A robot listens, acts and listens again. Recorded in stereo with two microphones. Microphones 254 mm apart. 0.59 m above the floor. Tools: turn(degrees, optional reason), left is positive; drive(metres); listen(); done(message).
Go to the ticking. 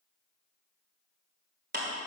listen()
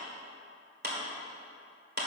listen()
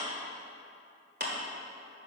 done("I can't make out ticking, only a clap.")